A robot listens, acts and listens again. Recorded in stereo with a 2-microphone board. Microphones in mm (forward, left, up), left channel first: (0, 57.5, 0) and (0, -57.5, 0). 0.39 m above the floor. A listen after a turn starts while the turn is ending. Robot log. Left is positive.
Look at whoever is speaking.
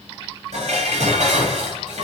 cmd idle
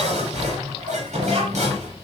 note: The child speaking: about 60° right or 120° right.
cmd yaw -60
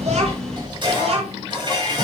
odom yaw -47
note: So it is at 65° right.
cmd yaw -65
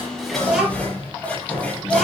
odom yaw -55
end: Facing the child speaking, over 4 m away.